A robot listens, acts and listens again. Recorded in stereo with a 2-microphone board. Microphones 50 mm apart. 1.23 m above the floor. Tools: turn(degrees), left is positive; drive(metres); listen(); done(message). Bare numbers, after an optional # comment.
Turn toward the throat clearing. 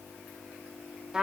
listen()
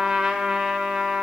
listen()
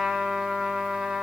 done("I can't make out throat clearing to turn to.")